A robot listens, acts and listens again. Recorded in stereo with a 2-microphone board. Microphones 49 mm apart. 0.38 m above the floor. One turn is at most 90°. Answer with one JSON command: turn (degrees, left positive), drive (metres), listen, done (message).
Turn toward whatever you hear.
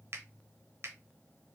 {"turn": -55}
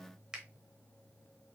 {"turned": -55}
{"turn": -15}
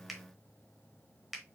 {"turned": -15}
{"done": "Found it: a finger snap, straight ahead, 1 to 2 m away."}